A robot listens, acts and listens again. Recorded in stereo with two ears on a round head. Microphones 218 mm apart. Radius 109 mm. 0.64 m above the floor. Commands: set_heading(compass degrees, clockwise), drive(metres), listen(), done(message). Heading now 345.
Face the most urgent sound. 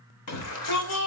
set_heading(275)
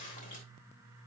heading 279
listen()
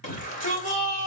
set_heading(244)
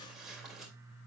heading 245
listen()
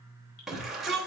done("Facing the shout, 2 to 4 m away.")